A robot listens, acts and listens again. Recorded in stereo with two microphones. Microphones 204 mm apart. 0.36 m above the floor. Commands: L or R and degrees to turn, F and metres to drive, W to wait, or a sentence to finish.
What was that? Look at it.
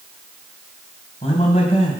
L30
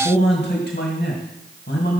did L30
L110
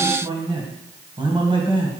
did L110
R30
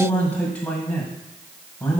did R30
Facing the man speaking, 1 to 2 m away.